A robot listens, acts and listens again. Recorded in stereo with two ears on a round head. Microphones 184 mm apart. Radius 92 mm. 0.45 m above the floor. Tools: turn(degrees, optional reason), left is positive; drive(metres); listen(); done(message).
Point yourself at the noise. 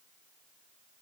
listen()
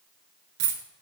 turn(degrees=-75, reason="The dropped coin: about 75° right or 105° right.")
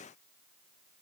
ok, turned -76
listen()
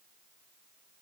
done("I heard a dropped coin, but can't make it out now. It was about 5° left or 30° right.")